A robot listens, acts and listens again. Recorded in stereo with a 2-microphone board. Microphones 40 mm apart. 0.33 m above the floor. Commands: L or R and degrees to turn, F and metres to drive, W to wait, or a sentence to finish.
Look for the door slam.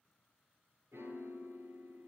W
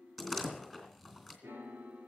R30
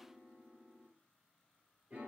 W
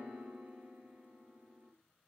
I heard a door slam, but can't make it out now. It was about 25° left or 145° right.